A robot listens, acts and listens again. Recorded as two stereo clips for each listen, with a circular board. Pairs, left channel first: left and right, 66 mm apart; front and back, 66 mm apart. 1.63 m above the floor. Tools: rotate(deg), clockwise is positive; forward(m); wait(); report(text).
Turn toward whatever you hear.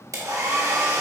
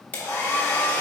rotate(60)
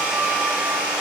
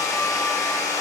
rotate(20)
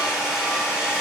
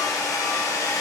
rotate(10)
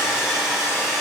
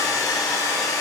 report("Facing the hair dryer.")